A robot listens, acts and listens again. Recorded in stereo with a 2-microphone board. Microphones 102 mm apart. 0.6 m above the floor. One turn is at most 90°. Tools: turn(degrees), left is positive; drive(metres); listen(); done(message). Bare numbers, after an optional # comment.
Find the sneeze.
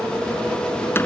listen()
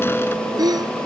# The sneeze: about 40° right or 140° right.
turn(-40)
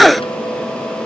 done("Found it: a sneeze, straight ahead.")